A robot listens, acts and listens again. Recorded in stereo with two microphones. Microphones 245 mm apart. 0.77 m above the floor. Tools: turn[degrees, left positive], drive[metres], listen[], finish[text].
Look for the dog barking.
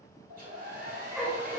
Action: turn[30]
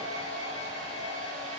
Action: listen[]
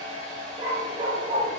Thought: So it is at 30° right.
Action: turn[-30]
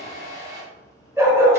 Thought: The dog barking is now 10° right.
Action: turn[-10]
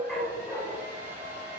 Action: finish[Found it: a dog barking, straight ahead, under 1 m away.]